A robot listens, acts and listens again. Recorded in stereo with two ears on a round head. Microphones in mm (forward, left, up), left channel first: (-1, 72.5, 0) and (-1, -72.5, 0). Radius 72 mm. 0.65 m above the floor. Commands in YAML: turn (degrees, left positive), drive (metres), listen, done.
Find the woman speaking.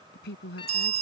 turn: 70
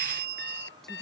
listen: true
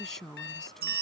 done: "Found it: a woman speaking, straight ahead."